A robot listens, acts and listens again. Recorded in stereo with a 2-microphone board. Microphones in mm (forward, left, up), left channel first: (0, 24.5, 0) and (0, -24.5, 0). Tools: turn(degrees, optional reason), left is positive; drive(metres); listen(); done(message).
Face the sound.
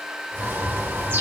turn(degrees=-45, reason="The bird: about 45° right or 135° right.")
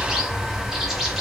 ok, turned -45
turn(degrees=-10, reason="So it is at 10° right.")
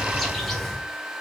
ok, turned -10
done("Found it: a bird, straight ahead, 2 to 4 m away.")